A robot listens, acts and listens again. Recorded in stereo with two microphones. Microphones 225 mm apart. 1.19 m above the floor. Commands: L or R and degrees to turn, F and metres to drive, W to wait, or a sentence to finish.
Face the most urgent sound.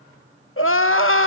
L65
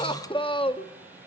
L25
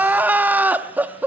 R10
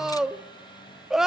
Found it: crying, straight ahead.